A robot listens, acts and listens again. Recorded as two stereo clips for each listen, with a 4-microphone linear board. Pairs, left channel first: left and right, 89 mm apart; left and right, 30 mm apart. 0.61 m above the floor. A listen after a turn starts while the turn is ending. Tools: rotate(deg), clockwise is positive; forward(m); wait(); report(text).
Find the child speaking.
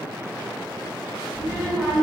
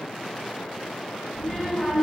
rotate(-30)
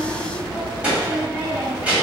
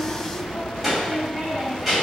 rotate(15)
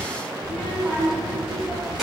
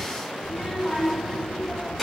report("Found it: a child speaking, straight ahead, 1 to 2 m away.")